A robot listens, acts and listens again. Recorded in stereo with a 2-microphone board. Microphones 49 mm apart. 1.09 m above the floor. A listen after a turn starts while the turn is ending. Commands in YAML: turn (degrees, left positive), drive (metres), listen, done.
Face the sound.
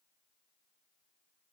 listen: true
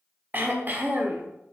turn: -40
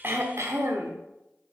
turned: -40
turn: -95
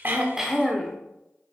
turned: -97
done: "Found it: throat clearing, straight ahead, 1 to 2 m away."